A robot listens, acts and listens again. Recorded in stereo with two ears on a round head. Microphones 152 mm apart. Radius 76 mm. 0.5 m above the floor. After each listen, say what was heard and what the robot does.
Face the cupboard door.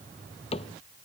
The cupboard door: about 35° left or 145° left. Turn 35° left.
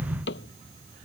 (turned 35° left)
So it is at 105° left. Turn 105° left.
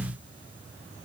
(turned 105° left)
Keep listening.
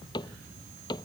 The cupboard door is now 25° left. Turn 25° left.
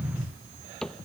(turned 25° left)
Facing the cupboard door.